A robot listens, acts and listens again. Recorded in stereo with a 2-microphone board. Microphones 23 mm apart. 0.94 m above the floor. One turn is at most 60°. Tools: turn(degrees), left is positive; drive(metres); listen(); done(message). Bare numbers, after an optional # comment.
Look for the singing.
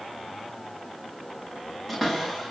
listen()
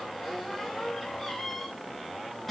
listen()
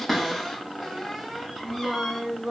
# The singing: about 15° right or 165° right.
turn(-15)
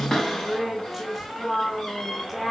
turn(-30)
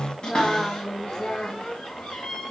# So it is at 20° left.
turn(20)
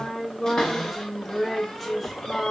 # The singing is now 10° left.
turn(10)
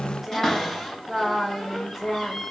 done("Found it: singing, straight ahead.")